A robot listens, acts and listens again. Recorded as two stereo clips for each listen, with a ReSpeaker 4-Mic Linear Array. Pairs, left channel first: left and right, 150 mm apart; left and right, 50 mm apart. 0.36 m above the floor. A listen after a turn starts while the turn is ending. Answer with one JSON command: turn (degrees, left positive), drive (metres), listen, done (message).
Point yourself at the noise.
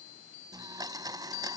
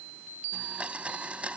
{"turn": -25}
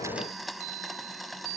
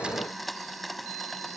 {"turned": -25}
{"done": "Found it: a blender, straight ahead."}